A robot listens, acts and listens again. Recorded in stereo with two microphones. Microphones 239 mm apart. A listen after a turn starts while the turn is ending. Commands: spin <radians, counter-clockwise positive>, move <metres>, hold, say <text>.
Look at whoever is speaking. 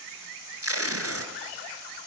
hold
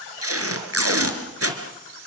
hold
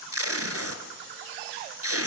say I can't make out anyone speaking to turn to.